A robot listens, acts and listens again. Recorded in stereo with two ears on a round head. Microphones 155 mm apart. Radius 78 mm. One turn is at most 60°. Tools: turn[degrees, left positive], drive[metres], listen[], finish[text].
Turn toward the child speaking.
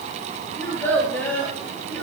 Action: turn[30]
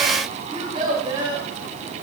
Thought: So it is at 30° right.
Action: turn[-30]
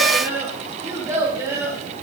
Thought: The child speaking is now 20° right.
Action: turn[-20]
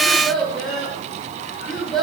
Action: finish[Facing the child speaking, over 4 m away.]